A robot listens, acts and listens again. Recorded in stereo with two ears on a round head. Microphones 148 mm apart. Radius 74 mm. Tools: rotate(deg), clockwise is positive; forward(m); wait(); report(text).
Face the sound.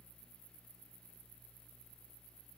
wait()
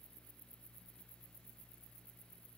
wait()
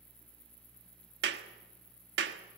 rotate(70)
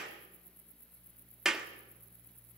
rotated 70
report("Facing the clap.")